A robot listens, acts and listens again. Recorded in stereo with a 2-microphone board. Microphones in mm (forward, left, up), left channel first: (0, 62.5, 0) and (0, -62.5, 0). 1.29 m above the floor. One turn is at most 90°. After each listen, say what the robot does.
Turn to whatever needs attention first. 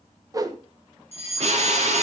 Turn 55° left.
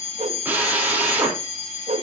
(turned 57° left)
Turn 65° left.
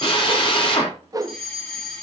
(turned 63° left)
Found it: a fire alarm, straight ahead, over 4 m away.